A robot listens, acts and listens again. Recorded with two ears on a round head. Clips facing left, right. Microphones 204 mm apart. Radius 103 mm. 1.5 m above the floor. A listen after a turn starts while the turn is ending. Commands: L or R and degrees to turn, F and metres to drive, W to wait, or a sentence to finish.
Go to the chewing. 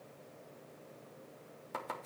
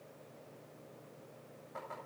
W
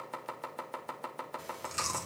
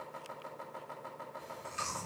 L60
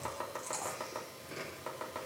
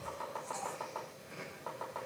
L60
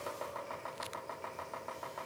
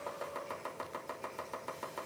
W
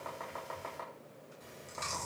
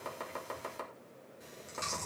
R10
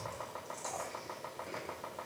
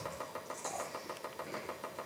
F1.0
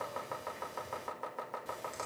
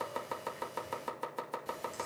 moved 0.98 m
F1.0
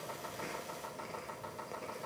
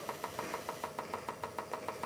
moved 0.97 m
F1.0
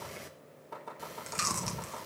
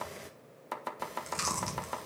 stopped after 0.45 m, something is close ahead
I am next to the chewing.